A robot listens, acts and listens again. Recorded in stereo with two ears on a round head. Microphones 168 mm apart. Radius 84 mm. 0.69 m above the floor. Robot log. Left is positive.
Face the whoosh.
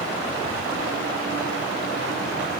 cmd idle
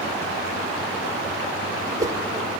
note: The whoosh: about 20° right or 160° right.
cmd yaw -20
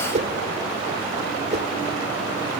note: So it is at 140° right.
cmd yaw -140
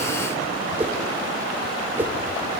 note: The whoosh is now 10° right.
cmd yaw -10
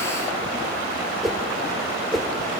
end: Found it: a whoosh, straight ahead, 1 to 2 m away.